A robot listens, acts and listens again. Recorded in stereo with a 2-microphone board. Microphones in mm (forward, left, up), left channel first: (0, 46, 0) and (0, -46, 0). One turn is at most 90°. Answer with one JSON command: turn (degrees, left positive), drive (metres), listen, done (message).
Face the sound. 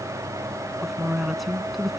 {"turn": 30}
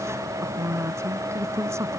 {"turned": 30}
{"turn": -30}
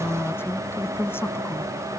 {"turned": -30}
{"turn": 25}
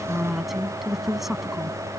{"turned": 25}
{"done": "Found it: a woman speaking, straight ahead."}